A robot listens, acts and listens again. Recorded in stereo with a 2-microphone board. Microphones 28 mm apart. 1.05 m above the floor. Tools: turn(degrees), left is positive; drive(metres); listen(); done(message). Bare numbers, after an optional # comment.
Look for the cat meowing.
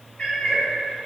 # The cat meowing: about 45° left or 135° left.
turn(45)
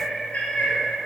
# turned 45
# So it is at 120° left.
turn(120)
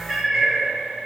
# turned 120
# The cat meowing is now 10° right.
turn(-10)
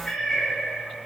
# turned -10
# The cat meowing is now 10° left.
turn(10)
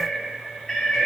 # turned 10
# The cat meowing is now 10° left.
turn(10)
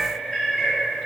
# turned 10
done("Facing the cat meowing.")